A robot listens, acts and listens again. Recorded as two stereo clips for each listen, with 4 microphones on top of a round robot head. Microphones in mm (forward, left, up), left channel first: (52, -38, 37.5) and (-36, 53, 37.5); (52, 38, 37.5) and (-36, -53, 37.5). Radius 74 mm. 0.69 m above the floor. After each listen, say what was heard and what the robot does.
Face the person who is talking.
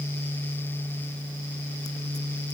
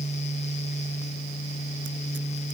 Keep listening.
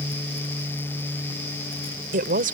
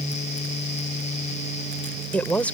The woman speaking: 125° left. Turn 125° left.
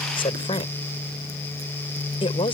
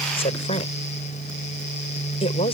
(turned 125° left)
Facing the woman speaking.